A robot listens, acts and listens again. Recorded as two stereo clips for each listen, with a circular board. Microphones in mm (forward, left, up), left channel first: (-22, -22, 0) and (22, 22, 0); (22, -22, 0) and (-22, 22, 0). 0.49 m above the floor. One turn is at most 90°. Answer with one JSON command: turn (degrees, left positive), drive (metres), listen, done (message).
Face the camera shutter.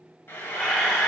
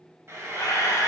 {"turn": -55}
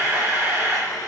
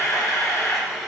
{"turn": -15}
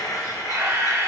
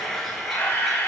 {"done": "Found it: a camera shutter, straight ahead, under 1 m away."}